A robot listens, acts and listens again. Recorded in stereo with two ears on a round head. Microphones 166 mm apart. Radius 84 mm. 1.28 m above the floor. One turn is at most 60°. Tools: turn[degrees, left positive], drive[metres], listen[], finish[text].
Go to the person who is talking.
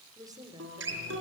Thought: The woman speaking: about 20° right or 160° right.
Action: turn[-20]
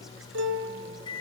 Action: listen[]
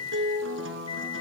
Action: listen[]
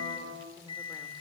Action: finish[I heard a woman speaking, but can't make it out now. It was about straight ahead or 140° right. I did not reach it.]